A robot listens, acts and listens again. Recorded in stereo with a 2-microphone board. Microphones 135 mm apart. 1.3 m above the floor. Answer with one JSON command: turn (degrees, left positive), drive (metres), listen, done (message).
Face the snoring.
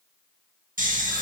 {"turn": -90}
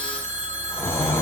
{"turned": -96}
{"turn": 20}
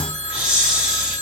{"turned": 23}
{"done": "Facing the snoring."}